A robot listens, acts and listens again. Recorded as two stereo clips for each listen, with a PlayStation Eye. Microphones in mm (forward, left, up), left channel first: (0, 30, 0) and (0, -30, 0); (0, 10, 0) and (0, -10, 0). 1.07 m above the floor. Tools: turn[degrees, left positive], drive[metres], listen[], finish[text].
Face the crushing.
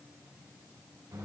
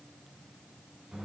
Action: listen[]
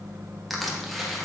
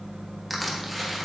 Action: turn[-30]
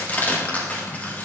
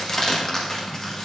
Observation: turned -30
Thought: So it is at 30° left.
Action: turn[30]
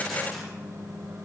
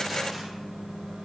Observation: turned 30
Action: listen[]
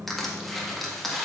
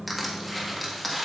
Action: finish[Found it: crushing, straight ahead.]